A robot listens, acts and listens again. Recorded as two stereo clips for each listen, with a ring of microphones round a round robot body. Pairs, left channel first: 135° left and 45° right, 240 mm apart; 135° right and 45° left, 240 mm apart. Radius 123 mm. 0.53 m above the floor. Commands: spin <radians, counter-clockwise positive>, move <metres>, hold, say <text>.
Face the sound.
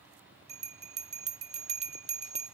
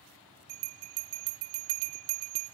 spin 0.35
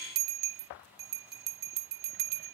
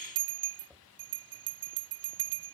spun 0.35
say Found it: a bell, straight ahead.